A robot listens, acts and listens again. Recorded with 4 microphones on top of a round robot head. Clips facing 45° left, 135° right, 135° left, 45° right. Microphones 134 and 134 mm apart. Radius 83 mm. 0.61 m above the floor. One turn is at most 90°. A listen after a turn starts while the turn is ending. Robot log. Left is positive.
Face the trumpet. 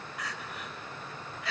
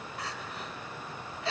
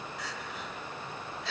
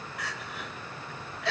cmd idle
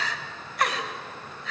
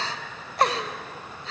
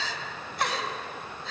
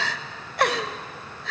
cmd idle
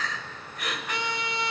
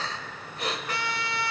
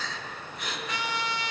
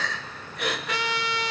note: The trumpet: 25° right.
cmd yaw -25
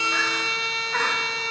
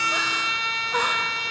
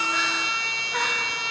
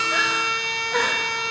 note: The trumpet is now 10° right.
cmd yaw -10
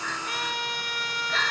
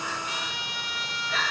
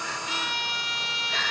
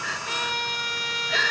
end: Found it: a trumpet, straight ahead.